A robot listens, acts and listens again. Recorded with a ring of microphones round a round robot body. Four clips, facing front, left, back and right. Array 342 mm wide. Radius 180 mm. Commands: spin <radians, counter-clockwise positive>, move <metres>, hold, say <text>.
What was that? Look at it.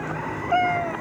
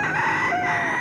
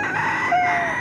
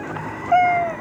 spin -1.40
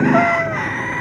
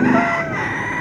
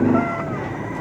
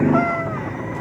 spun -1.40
hold
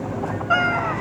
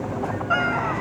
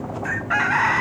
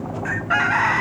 hold
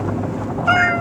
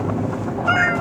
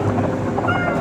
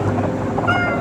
say Found it: a cat meowing, straight ahead.